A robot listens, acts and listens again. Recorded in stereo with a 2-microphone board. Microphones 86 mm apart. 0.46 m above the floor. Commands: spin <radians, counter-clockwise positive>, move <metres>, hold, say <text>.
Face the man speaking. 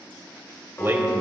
spin -0.52
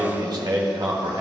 spin -2.09
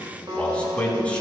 spin 0.26
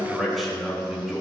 say Facing the man speaking, over 4 m away.